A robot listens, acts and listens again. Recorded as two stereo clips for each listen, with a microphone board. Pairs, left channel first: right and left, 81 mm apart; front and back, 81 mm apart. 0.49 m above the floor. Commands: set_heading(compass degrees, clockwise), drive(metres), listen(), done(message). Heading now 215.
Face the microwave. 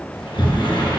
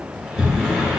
listen()
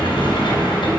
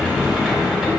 listen()
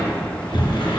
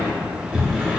done("I can't make out a microwave to turn to.")